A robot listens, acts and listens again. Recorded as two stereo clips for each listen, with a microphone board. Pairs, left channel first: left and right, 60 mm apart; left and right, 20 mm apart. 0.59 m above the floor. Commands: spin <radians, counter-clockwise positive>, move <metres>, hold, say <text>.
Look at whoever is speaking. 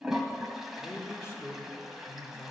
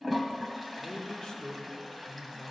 spin 0.70
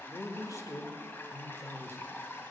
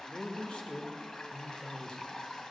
spin 1.57
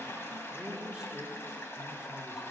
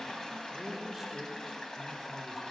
spin -0.26
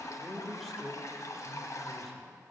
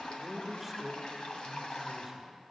say Facing the man speaking.